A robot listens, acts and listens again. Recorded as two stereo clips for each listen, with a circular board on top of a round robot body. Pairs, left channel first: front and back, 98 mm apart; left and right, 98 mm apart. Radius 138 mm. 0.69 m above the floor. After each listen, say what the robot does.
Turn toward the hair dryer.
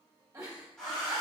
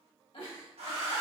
Turn 85° right.
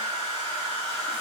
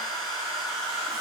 Found it: a hair dryer, straight ahead, 1 to 2 m away.